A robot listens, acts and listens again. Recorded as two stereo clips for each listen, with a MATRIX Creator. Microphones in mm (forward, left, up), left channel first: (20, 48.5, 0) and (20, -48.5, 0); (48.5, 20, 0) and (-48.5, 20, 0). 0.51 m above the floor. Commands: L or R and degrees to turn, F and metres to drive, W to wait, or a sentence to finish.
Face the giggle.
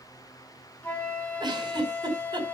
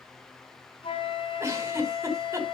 R125
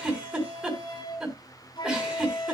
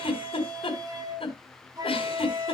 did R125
R10
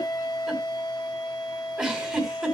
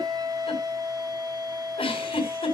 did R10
R10
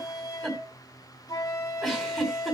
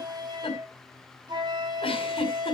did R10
Facing the giggle, over 4 m away.